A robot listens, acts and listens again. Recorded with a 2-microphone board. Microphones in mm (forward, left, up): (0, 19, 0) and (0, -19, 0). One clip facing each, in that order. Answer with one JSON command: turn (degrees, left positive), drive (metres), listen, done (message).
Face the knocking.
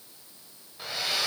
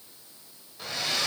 {"listen": true}
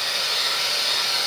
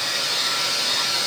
{"listen": true}
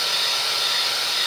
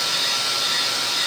{"done": "I can't make out knocking, only a hair dryer."}